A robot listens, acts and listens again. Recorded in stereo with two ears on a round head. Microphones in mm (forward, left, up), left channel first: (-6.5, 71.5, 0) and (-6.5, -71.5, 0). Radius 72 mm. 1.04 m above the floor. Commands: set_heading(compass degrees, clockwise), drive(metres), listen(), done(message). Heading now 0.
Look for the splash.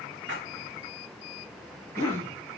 set_heading(90)
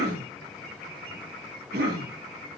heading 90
done("I heard a splash from this way, but can't make it out now.")